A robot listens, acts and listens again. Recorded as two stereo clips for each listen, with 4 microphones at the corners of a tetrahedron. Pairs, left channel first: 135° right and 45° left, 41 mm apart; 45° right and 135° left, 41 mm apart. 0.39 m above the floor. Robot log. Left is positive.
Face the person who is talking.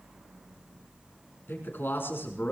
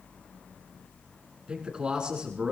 note: The man speaking: 155° right.
cmd yaw -155
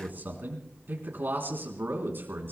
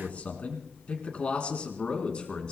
note: The man speaking is now 20° left.
cmd yaw +20
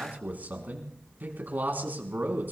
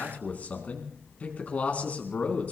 end: Found it: a man speaking, straight ahead.